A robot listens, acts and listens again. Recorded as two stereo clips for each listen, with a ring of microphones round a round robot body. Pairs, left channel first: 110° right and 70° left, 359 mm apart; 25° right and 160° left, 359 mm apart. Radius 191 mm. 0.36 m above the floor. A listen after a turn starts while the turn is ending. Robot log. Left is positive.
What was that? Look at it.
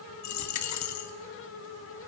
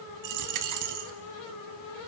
note: The dropped coin: 160° right.
cmd yaw -160
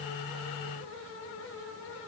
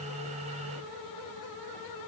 end: Facing where the dropped coin came from. I can't hear it now.